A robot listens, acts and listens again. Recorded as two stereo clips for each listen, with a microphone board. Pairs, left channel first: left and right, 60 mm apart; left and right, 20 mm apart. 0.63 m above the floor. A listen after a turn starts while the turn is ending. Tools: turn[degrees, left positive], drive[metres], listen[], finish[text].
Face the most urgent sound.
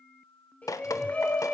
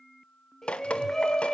Thought: The shout: about 25° left or 155° left.
Action: turn[25]
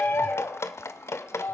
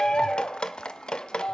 Thought: So it is at 130° left.
Action: turn[130]
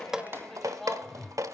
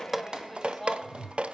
Action: finish[Facing the shout, over 4 m away.]